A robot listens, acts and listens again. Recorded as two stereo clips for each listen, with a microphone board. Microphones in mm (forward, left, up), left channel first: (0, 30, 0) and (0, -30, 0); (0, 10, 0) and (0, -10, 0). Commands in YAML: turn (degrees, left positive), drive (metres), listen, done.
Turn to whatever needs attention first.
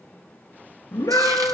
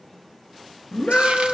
turn: 90
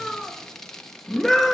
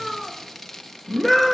done: "Facing the scream, 2 to 4 m away."